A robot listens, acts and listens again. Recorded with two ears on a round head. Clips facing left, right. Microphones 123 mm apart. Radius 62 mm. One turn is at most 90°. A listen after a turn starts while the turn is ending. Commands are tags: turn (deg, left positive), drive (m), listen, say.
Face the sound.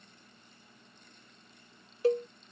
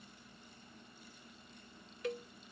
<turn deg="30"/>
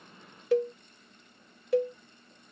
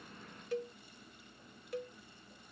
<turn deg="90"/>
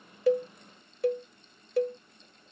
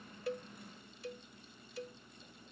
<turn deg="45"/>
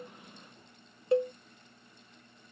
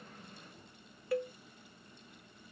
<turn deg="25"/>
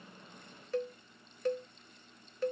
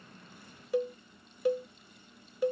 <turn deg="-10"/>
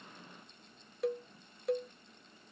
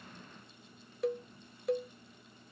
<say>Facing the cowbell.</say>